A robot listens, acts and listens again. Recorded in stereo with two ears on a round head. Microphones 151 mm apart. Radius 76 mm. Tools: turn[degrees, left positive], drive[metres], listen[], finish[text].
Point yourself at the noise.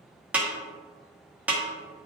Action: turn[-30]
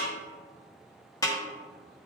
Thought: So it is at 20° left.
Action: turn[20]
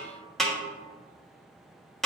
Action: finish[Facing the snare drum, 1 to 2 m away.]